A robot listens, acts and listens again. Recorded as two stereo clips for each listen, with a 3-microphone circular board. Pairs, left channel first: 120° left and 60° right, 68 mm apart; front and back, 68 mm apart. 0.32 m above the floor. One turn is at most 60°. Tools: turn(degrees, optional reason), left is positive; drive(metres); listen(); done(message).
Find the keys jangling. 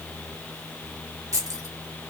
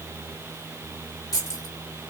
turn(degrees=-25, reason="The keys jangling: 25° right.")
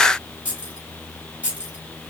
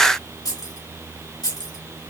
turn(degrees=10, reason="The keys jangling is now 10° left.")
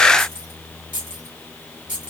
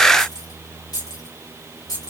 done("Facing the keys jangling.")